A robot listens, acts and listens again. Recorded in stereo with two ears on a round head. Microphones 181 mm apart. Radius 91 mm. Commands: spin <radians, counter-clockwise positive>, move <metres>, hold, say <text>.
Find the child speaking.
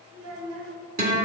spin -1.22
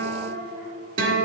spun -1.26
spin -0.17
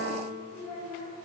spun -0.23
say Facing the child speaking, 2 to 4 m away.